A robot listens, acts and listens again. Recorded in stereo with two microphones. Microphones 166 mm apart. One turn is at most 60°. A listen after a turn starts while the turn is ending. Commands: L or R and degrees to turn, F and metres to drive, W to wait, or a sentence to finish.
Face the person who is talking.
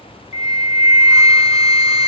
W
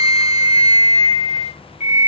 W
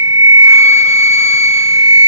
I can't make out anyone speaking to turn to.